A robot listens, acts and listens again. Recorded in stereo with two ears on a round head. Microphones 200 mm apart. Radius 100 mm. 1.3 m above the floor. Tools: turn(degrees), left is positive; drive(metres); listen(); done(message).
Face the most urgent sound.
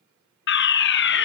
turn(degrees=60)
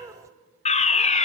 turn(degrees=40)
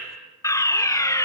turn(degrees=15)
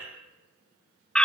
done("Facing the fire alarm.")